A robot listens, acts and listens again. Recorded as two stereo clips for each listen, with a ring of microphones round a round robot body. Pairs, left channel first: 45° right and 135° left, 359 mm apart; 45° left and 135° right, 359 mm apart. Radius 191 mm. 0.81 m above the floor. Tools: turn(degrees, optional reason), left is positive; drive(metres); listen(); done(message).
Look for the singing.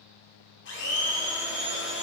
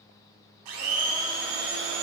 listen()
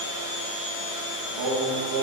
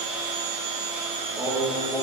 turn(degrees=145, reason="The singing: 145° left.")
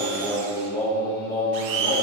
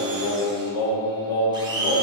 turn(degrees=35, reason="The singing is now 35° left.")
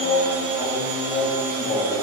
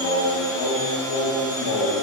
turn(degrees=15, reason="The singing is now 15° left.")
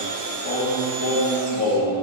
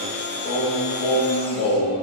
done("Found it: singing, straight ahead, 1 to 2 m away.")